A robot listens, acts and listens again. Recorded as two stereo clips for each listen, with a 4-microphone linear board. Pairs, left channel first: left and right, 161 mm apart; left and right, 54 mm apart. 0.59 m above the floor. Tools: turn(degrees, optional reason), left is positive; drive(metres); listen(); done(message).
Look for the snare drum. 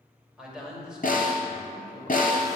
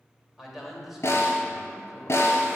turn(degrees=55, reason="The snare drum: about 55° left or 125° left.")
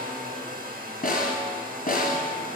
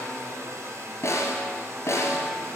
turn(degrees=65, reason="So it is at 65° left.")
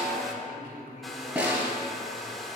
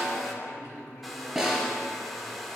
turn(degrees=-10, reason="The snare drum is now 10° right.")
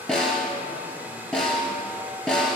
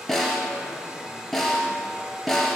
done("Found it: a snare drum, straight ahead, 1 to 2 m away.")